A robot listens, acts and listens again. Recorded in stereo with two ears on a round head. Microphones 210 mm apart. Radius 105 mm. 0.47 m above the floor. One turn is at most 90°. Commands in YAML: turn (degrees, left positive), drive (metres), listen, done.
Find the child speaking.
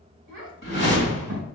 turn: -65
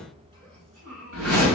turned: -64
turn: -40
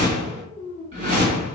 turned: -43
done: "Found it: a child speaking, straight ahead, 2 to 4 m away."